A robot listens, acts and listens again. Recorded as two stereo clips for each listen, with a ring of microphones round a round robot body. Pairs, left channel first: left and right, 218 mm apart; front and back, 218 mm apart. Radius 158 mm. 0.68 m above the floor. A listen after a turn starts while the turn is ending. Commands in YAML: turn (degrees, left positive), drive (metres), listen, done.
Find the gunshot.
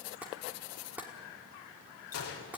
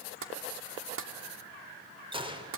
turn: 115
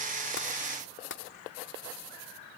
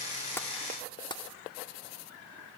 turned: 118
done: "Facing where the gunshot came from. I can't hear it now."